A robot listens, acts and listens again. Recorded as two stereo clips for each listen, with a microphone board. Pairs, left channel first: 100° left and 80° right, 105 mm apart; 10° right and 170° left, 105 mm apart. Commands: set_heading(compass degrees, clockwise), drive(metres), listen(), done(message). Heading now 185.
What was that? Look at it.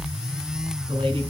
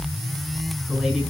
set_heading(290)
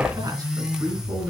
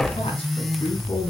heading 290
set_heading(320)
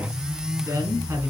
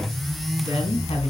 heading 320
set_heading(340)
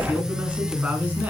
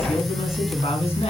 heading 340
done("Facing the man speaking.")